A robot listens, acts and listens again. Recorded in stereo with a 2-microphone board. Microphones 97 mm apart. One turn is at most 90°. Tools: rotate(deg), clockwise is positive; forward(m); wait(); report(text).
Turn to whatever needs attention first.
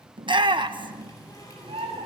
rotate(55)
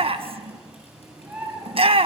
rotate(70)
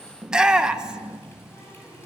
report("Facing the shout, 1 to 2 m away.")